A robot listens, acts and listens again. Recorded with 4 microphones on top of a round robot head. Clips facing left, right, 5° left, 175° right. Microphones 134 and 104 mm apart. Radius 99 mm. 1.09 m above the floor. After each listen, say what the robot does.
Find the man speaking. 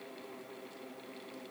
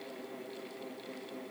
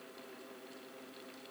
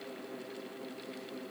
Keep listening.
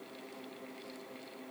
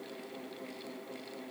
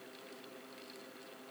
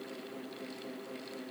Keep listening.
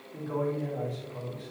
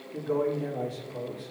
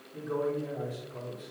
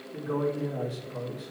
Turn 150° right.
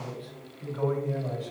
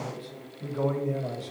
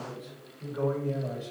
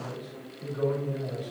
Turn 40° right.
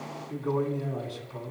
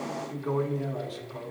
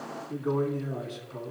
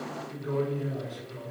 Found it: a man speaking, straight ahead.